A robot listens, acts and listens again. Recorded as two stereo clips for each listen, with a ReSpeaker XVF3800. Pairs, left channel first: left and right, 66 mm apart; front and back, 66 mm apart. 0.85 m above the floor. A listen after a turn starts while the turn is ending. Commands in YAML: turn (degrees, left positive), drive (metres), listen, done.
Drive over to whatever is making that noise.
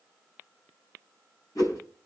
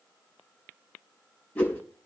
turn: 70
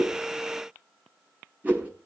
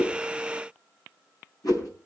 turn: -25
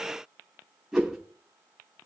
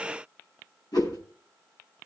turn: -10
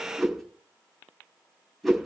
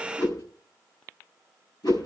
drive: 1.0
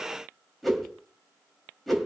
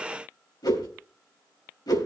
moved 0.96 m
drive: 1.0
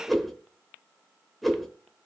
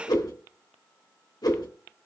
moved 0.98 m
drive: 1.0
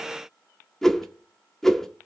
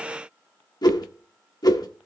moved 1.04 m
drive: 1.0
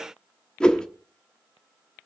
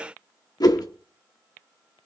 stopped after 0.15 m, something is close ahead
turn: 15
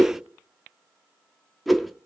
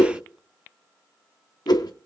done: "I am next to the whoosh."